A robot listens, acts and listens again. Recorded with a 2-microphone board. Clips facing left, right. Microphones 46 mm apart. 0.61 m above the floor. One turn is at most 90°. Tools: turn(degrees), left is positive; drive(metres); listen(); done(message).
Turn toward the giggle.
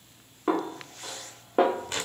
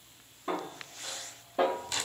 listen()
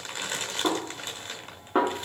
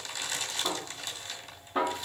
listen()
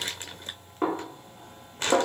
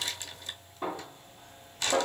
done("I can't make out a giggle, only a snare drum and crumpling.")